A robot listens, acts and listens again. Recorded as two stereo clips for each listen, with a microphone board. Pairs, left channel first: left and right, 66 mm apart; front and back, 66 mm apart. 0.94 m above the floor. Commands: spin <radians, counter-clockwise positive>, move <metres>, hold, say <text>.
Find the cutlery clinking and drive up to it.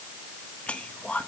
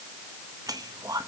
hold
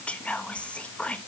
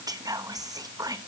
hold
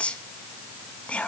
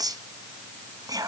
say I can't make out cutlery clinking, only whispering.